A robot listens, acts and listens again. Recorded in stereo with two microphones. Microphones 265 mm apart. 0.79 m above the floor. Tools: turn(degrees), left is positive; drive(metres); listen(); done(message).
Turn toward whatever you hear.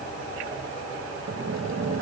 turn(degrees=-90)
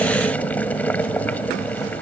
done("Facing the boiling.")